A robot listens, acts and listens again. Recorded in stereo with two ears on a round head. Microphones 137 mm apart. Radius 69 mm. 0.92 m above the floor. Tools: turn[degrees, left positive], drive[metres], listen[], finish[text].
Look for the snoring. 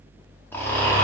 Thought: The snoring: about 15° left or 165° left.
Action: turn[15]
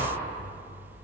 Action: listen[]
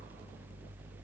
Action: listen[]
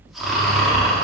Action: finish[Found it: snoring, straight ahead.]